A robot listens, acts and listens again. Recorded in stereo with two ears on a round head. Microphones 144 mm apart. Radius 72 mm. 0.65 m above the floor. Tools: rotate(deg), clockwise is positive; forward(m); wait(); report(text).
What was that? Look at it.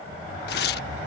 rotate(-70)
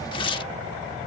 rotate(-30)
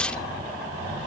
report("Facing the tearing paper.")